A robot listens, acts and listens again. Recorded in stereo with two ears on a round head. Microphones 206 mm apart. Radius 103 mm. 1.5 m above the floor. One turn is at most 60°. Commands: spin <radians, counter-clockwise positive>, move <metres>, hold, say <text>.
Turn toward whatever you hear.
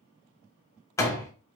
spin 0.52
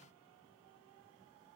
hold
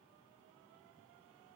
say I heard a door slam, but can't make it out now. It was about 15° right or 135° left.